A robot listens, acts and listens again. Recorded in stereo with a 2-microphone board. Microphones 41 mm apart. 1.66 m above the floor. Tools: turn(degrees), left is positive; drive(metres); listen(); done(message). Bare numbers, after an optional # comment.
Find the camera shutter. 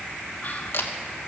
turn(90)
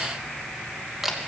# So it is at 10° right.
turn(-10)
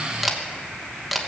done("Found it: a camera shutter, straight ahead.")